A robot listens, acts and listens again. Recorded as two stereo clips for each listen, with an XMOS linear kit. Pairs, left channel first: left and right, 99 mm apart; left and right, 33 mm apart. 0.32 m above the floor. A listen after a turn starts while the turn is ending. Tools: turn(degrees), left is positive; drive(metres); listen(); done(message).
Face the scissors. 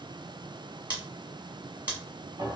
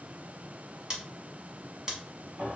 turn(degrees=-20)
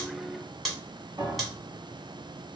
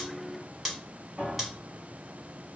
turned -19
done("Found it: scissors, straight ahead, 1 to 2 m away.")